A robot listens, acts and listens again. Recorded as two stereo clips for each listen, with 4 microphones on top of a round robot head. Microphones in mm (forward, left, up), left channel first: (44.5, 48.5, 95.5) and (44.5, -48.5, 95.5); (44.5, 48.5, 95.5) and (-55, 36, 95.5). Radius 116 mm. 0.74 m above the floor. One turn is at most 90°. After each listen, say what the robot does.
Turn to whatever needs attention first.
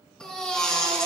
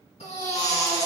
Turn 10° left.
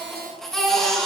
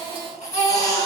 Facing the baby crying, 2 to 4 m away.